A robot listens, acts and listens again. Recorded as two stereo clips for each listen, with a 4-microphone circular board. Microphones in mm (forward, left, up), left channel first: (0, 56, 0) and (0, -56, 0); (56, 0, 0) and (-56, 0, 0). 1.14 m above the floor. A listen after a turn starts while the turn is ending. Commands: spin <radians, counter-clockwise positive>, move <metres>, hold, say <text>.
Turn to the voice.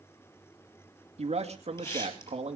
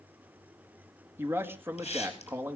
spin -1.92
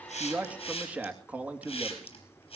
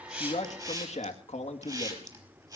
spin -0.26
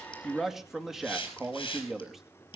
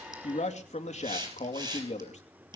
say Facing the man speaking, 2 to 4 m away.